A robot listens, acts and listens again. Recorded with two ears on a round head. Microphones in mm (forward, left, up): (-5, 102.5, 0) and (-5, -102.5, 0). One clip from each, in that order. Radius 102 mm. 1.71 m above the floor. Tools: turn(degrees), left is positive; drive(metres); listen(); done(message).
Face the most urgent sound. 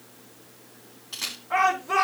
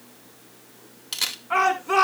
turn(degrees=-60)
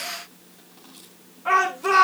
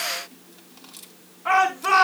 done("Facing the shout, over 4 m away.")